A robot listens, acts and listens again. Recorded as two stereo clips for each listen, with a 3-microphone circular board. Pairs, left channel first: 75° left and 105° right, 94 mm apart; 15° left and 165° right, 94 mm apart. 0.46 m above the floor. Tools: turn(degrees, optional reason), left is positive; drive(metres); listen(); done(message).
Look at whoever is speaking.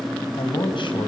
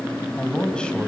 turn(degrees=95, reason="The man speaking: 95° left.")
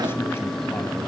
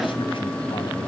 listen()
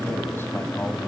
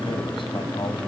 listen()
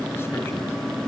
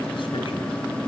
done("Facing where the man speaking came from. I can't hear it now.")